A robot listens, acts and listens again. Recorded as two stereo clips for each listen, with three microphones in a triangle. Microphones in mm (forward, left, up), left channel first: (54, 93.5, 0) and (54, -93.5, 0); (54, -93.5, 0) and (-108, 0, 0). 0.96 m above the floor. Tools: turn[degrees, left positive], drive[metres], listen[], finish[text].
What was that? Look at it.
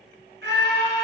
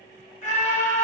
Thought: The scream: 80° right.
Action: turn[-80]
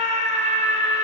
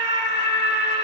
Thought: The scream is now 40° right.
Action: turn[-40]
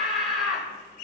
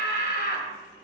Action: finish[Found it: a scream, straight ahead, 1 to 2 m away.]